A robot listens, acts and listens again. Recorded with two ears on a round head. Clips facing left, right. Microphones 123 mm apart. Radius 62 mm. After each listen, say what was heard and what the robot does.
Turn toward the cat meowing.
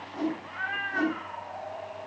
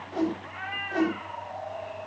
The cat meowing: about 20° right or 160° right. Turn 20° right.
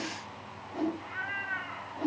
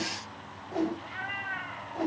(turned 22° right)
So it is at 140° right. Turn 140° right.
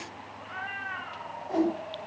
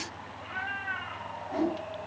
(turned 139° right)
Found it: a cat meowing, straight ahead, over 4 m away.